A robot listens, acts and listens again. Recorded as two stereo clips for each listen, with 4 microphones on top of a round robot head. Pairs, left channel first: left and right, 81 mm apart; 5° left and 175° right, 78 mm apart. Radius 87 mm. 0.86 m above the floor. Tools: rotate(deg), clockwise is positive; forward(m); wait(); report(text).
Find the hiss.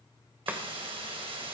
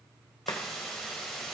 rotate(85)
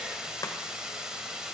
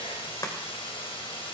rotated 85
rotate(10)
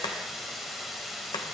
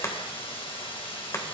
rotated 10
report("Facing the hiss, 2 to 4 m away.")